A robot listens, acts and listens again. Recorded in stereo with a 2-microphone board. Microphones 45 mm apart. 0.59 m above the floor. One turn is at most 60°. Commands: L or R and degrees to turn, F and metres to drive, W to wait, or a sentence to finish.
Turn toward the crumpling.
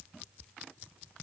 W
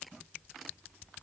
W
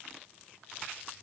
I can't make out crumpling.